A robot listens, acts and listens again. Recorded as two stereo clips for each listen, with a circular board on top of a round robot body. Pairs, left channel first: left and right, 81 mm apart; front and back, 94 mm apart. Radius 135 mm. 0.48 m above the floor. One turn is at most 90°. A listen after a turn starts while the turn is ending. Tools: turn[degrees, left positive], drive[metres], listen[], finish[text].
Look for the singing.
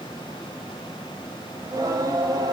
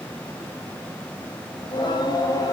Thought: The singing: 50° right.
Action: turn[-50]
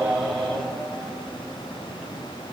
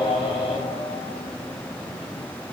Action: finish[Found it: singing, straight ahead.]